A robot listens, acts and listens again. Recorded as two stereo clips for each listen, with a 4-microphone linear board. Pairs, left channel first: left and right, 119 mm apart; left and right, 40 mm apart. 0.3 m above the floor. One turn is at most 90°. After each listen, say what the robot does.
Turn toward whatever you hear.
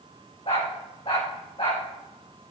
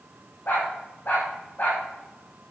Turn 50° left.
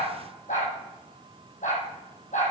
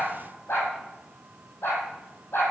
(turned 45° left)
Turn 80° left.
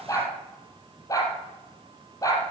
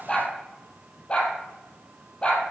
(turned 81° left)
Turn 25° left.
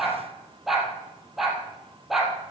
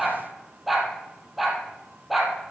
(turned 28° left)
Found it: a dog barking, straight ahead.